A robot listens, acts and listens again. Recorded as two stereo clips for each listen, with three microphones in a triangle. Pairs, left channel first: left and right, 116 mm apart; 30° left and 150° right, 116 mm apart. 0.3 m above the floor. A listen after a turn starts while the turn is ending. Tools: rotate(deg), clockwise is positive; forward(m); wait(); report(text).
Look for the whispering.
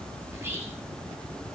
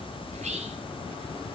rotate(165)
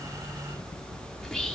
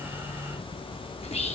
report("Facing the whispering.")